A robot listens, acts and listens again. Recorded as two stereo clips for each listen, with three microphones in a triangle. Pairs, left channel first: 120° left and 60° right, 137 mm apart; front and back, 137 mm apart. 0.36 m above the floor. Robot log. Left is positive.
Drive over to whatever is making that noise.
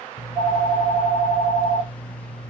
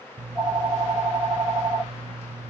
note: The phone ringing: 125° left.
cmd yaw +125
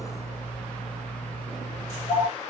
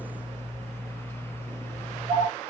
note: The phone ringing is now 10° right.
cmd yaw -10
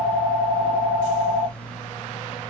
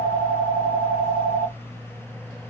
cmd fwd 1.0
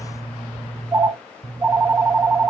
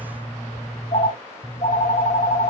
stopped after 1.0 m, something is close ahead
end: Arrived at the phone ringing, straight ahead.